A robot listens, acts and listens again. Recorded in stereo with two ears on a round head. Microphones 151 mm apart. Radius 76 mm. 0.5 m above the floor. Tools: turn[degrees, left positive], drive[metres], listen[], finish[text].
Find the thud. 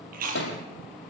Action: turn[90]
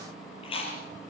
Action: finish[Facing where the thud came from. I can't hear it now.]